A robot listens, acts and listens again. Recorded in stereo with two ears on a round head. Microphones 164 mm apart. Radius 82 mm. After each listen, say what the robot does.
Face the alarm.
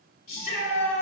Keep listening.
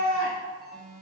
Turn 30° left.
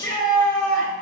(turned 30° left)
Keep listening.
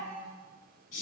Keep listening.
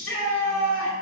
I heard an alarm, but can't make it out now. It was about 30° right or 150° left.